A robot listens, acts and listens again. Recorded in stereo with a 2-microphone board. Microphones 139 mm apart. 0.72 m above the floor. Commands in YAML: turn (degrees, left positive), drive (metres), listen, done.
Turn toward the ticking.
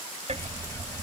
turn: -50
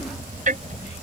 turn: -80
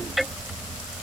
done: "Found it: ticking, straight ahead."